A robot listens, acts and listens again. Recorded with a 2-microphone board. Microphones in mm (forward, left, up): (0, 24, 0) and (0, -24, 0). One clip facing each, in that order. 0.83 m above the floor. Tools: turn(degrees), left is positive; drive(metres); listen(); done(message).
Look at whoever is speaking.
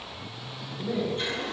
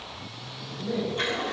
turn(degrees=30)
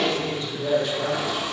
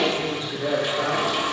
turn(degrees=-35)
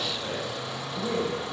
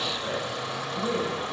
done("Facing the man speaking.")